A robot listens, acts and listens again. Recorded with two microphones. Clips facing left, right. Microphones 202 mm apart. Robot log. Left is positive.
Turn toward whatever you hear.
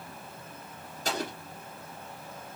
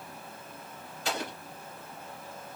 note: The explosion: about 45° left or 135° left.
cmd yaw +45
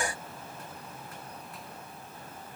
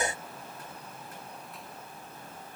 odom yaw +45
cmd idle
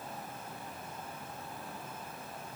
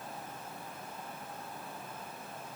end: I heard an explosion, but can't make it out now. It was about straight ahead or 90° left.